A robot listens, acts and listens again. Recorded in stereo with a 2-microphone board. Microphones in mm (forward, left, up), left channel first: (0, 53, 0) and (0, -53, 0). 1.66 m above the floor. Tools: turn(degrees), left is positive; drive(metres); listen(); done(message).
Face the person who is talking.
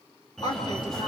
turn(degrees=45)
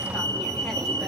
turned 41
listen()
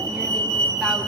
listen()
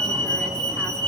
done("I heard a woman speaking, but can't make it out now. It was about straight ahead or 95° left.")